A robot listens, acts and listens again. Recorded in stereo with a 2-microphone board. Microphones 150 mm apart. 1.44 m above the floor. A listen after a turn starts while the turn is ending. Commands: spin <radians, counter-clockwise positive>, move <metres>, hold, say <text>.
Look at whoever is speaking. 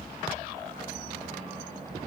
hold
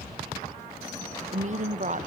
spin -0.87
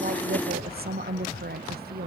spin -1.40
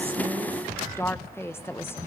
spin 0.26
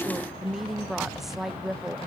say Facing the woman speaking.